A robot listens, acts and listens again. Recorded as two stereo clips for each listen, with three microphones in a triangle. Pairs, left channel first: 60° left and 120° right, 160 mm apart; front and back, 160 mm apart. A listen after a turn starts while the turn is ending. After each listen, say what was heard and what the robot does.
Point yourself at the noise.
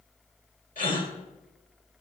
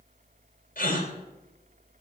The gasp: 30° left. Turn 30° left.
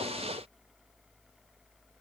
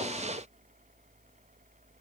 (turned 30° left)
I heard a gasp from this way, but can't make it out now.